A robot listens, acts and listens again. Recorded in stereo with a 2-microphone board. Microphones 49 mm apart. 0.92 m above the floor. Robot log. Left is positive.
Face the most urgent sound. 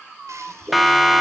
cmd yaw +30
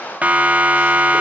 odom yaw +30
note: So it is at 35° right.
cmd yaw -35
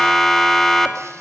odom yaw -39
end: Facing the siren, 2 to 4 m away.